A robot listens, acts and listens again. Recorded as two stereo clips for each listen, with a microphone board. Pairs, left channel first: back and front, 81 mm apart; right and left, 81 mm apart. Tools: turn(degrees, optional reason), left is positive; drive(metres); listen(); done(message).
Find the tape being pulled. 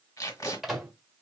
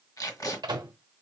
turn(degrees=-135, reason="The tape being pulled: 135° right.")
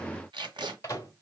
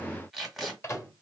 done("Facing the tape being pulled.")